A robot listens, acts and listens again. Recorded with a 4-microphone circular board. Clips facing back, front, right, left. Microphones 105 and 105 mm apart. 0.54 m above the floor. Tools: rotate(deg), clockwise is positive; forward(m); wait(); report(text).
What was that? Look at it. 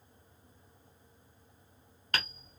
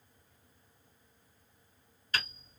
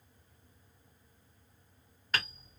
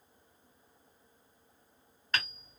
rotate(175)
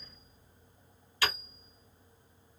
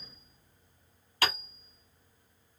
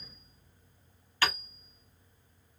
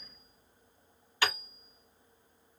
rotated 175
rotate(-15)
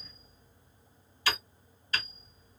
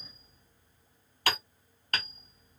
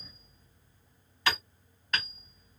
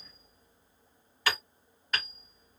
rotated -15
report("Facing the hammering.")